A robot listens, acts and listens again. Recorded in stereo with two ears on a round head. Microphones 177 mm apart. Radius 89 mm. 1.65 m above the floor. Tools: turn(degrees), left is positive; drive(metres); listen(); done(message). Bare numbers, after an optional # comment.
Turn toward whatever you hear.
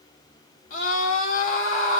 # The scream: about 40° left or 140° left.
turn(40)
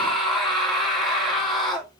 done("Facing the scream.")